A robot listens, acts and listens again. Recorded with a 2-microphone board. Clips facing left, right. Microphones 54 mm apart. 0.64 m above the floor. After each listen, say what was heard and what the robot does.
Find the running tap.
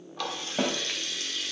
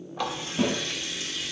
Turn 30° right.
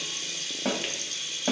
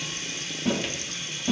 So it is at 135° right. Turn 135° right.
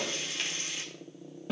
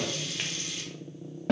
The running tap is now 30° left. Turn 30° left.
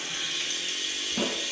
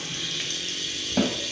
The running tap is now 15° left. Turn 15° left.
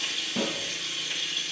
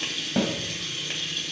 Facing the running tap, 1 to 2 m away.